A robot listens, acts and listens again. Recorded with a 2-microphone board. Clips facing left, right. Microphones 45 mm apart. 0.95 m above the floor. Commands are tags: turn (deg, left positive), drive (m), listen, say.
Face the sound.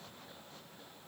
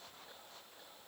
<listen/>
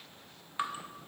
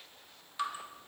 <turn deg="30"/>
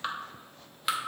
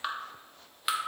<say>Facing the dripping, under 1 m away.</say>